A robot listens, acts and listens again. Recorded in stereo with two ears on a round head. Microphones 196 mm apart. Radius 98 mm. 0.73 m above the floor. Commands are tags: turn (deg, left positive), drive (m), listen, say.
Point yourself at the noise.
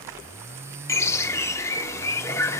<turn deg="30"/>
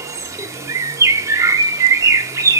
<turn deg="-15"/>
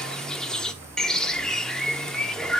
<say>Found it: a bird, straight ahead.</say>